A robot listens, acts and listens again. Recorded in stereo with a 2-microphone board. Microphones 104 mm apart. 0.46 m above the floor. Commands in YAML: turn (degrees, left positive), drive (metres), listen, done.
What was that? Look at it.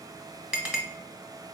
turn: -30
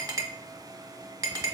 turn: -140
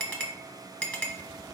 turn: 15
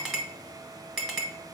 done: "Found it: a clink, straight ahead."